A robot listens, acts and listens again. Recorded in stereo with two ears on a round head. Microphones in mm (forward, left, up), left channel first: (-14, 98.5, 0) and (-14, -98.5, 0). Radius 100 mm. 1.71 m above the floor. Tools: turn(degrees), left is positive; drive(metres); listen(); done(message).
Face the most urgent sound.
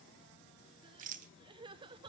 turn(degrees=-20)
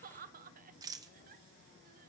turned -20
turn(degrees=-135)
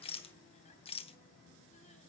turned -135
listen()
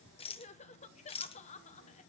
turn(degrees=30)
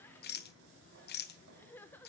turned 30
turn(degrees=10)
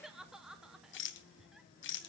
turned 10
done("Facing the crying.")